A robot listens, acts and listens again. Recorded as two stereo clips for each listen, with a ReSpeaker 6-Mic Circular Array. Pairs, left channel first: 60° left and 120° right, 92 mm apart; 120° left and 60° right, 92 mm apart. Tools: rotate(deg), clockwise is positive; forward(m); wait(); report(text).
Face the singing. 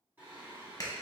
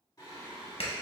rotate(-175)
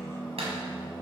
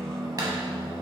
report("Facing the singing.")